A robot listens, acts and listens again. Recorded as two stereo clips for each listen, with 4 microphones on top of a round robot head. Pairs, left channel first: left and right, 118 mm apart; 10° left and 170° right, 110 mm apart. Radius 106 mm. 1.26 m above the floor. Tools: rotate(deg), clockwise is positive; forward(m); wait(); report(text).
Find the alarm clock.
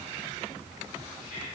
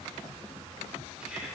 wait()
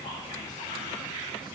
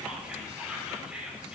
wait()
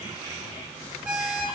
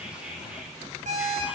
rotate(170)
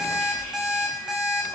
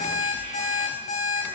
report("Found it: an alarm clock, straight ahead, 2 to 4 m away.")